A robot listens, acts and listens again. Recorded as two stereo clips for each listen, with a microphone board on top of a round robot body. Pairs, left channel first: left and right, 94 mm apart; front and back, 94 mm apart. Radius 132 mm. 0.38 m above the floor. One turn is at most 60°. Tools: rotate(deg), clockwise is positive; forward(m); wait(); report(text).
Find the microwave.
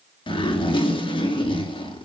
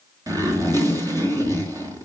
wait()
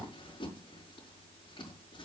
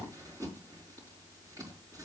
wait()
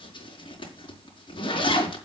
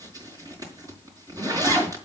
report("I can't make out a microwave to turn to.")